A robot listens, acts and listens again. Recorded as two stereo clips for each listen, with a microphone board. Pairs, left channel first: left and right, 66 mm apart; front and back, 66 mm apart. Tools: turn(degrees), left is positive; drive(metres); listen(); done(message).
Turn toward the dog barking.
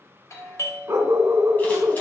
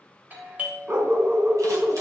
turn(degrees=-130)
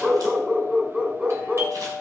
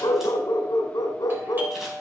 turn(degrees=-20)
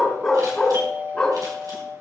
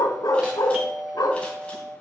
done("Facing the dog barking, 1 to 2 m away.")